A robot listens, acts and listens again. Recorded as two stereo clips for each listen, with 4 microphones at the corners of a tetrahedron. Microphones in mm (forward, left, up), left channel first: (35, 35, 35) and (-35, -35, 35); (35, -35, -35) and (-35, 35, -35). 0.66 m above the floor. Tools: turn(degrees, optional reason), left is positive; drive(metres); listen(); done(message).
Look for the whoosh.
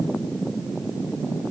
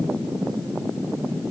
listen()
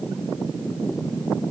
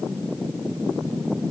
listen()
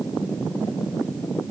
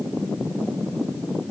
done("I can't make out a whoosh to turn to.")